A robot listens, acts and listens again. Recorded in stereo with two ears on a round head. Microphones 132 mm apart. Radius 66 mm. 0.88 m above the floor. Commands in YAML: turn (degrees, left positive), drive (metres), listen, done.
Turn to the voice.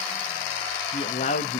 turn: 50
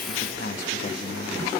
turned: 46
turn: 80
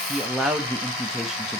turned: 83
done: "Facing the man speaking."